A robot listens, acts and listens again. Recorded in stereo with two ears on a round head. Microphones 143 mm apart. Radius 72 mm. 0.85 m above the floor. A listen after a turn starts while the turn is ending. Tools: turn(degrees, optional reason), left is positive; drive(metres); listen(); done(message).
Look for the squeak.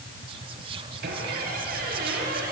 turn(degrees=-65, reason="The squeak: about 65° right or 115° right.")
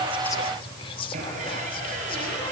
turn(degrees=-45, reason="So it is at 45° right.")
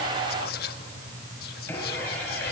turn(degrees=10, reason="The squeak is now 10° left.")
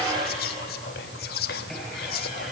done("Found it: a squeak, straight ahead.")